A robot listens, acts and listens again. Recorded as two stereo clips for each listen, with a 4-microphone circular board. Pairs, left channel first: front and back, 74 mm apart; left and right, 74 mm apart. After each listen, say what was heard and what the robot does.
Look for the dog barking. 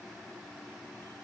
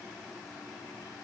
Keep listening.
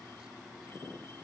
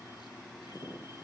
Keep listening.
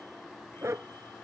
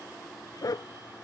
The dog barking: 125° left. Turn 125° left.
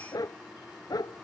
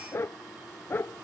The dog barking is now 25° left. Turn 25° left.
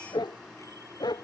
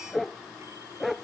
Facing the dog barking.